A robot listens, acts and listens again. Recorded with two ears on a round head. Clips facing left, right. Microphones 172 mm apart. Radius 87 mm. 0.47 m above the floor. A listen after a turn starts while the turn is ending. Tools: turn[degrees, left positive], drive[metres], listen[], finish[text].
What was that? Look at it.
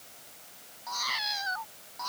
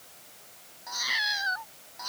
Thought: The cat meowing: about 15° right or 165° right.
Action: turn[-15]
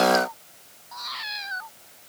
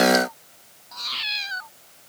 Thought: The cat meowing: about 40° right or 140° right.
Action: turn[-40]
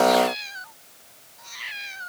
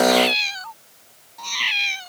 Thought: So it is at 95° right.
Action: turn[-95]
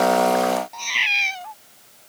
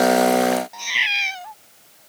Action: finish[Found it: a cat meowing, straight ahead.]